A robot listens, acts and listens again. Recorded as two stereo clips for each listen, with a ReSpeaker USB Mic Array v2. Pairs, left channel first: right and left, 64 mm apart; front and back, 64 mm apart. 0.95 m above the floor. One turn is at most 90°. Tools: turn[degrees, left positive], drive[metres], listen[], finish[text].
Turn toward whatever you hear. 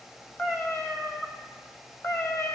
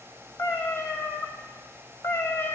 Thought: The cat meowing: 45° right.
Action: turn[-45]
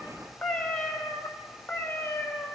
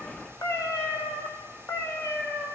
Thought: The cat meowing is now 45° right.
Action: turn[-45]
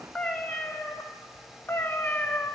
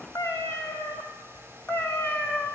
Thought: The cat meowing is now 40° right.
Action: turn[-40]
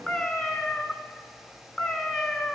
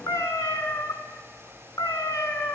Action: finish[Found it: a cat meowing, straight ahead, 1 to 2 m away.]